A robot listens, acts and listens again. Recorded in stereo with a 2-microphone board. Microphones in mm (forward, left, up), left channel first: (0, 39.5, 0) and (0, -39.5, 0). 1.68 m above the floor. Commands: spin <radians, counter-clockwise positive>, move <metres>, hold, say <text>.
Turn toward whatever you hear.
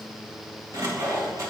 spin -0.70
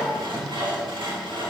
spin -1.83
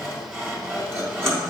spin -0.52
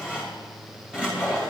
spin -0.26
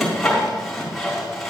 say Found it: sawing, straight ahead, 2 to 4 m away.